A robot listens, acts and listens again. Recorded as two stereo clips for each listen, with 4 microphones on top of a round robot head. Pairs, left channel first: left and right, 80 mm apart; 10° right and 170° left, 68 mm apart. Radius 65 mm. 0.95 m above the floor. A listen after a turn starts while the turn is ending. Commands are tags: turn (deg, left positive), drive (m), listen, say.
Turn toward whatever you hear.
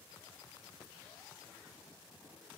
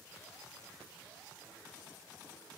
<listen/>
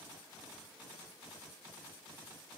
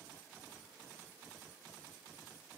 <listen/>
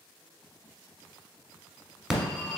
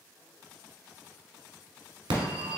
<turn deg="-175"/>
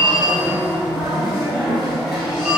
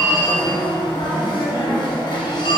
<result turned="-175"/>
<say>Facing the phone ringing, 1 to 2 m away.</say>